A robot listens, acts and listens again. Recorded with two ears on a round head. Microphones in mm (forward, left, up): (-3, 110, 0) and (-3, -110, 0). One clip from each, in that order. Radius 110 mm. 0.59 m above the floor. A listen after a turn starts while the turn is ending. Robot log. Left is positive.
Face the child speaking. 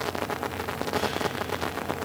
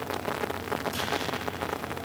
cmd idle
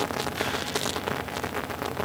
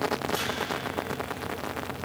cmd idle
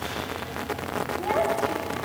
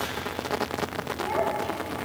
note: The child speaking: about 20° left or 160° left.
cmd yaw +20
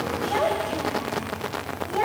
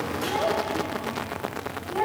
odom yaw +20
note: The child speaking: about 30° left or 150° left.
cmd yaw +30
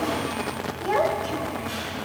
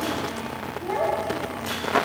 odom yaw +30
note: So it is at 125° left.
cmd yaw +125
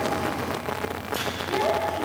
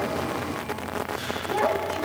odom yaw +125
note: The child speaking is now 30° right.
cmd yaw -30
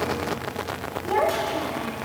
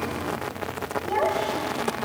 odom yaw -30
end: Found it: a child speaking, straight ahead, 2 to 4 m away.